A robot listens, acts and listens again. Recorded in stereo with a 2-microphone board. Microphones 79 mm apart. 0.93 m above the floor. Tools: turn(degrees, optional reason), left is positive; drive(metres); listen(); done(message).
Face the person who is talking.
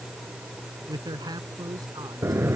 turn(degrees=-55, reason="The man speaking: about 55° right or 125° right.")
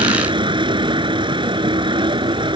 listen()
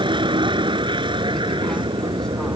listen()
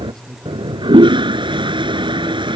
turn(degrees=10, reason="So it is at 10° left.")
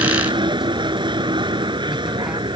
listen()
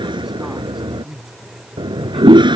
done("Facing the man speaking.")